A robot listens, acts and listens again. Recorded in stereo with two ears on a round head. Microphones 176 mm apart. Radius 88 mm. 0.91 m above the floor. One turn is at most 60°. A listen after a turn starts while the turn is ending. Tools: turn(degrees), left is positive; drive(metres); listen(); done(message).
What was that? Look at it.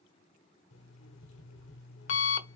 turn(degrees=60)
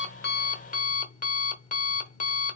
turn(degrees=45)
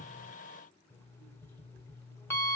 turn(degrees=15)
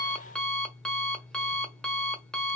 done("Facing the alarm clock.")